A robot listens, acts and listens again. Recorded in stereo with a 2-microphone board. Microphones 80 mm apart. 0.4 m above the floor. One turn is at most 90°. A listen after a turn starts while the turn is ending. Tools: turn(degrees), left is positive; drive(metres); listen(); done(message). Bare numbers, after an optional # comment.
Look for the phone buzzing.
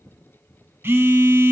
# The phone buzzing: about 30° right or 150° right.
turn(-30)
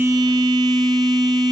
# So it is at 120° right.
turn(-90)
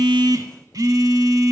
# The phone buzzing is now 55° right.
turn(-55)
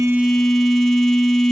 done("Found it: a phone buzzing, straight ahead, under 1 m away.")